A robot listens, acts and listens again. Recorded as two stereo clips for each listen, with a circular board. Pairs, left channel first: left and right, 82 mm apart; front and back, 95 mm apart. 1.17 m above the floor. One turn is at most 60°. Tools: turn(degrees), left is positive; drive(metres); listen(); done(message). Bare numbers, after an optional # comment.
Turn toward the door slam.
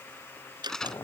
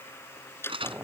# The door slam: 65° right.
turn(-60)
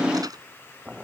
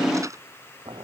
done("Facing where the door slam came from. I can't hear it now.")